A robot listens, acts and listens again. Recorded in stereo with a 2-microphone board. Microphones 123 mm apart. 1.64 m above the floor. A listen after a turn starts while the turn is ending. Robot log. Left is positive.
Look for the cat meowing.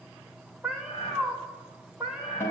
cmd yaw -30
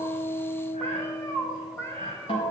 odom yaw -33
note: So it is at 20° left.
cmd yaw +20
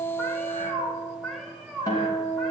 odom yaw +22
end: Found it: a cat meowing, straight ahead.